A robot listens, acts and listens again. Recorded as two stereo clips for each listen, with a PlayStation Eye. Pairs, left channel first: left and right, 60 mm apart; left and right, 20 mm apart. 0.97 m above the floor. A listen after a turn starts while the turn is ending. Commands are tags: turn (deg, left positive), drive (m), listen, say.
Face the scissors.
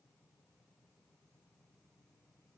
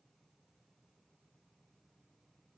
<listen/>
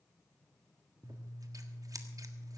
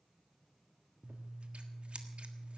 <turn deg="-70"/>
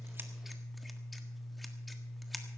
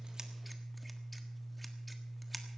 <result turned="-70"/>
<say>Facing the scissors.</say>